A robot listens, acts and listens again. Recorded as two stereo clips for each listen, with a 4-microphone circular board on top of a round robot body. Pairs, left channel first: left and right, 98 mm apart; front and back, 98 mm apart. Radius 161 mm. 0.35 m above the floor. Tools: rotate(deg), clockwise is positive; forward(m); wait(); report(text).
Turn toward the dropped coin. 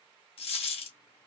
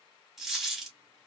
rotate(-95)
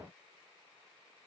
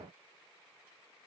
report("I heard a dropped coin from this way, but can't make it out now.")